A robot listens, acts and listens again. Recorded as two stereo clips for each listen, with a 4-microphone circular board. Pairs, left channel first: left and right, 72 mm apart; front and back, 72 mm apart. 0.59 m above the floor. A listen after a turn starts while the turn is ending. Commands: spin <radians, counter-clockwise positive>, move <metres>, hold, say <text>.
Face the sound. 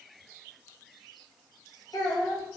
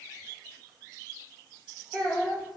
spin 1.48
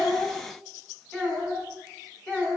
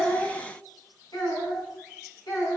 spin 0.26
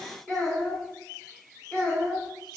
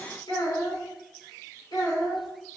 say Found it: a child speaking, straight ahead.